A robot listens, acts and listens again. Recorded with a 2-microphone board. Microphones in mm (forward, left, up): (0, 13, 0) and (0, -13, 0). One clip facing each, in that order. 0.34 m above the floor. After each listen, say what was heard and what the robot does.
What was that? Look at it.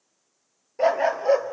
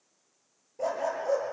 The dog barking: about 70° left or 110° left. Turn 70° left.
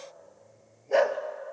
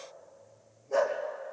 So it is at 40° left. Turn 40° left.
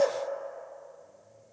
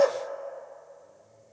The dog barking is now 20° right. Turn 20° right.
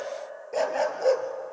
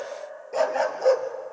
Found it: a dog barking, straight ahead, 1 to 2 m away.